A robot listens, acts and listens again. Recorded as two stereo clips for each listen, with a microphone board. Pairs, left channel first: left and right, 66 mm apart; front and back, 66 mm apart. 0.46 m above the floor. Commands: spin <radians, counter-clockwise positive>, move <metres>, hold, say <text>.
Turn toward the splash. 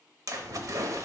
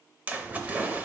spin -2.01
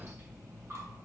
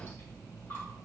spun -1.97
say Facing where the splash came from. I can't hear it now.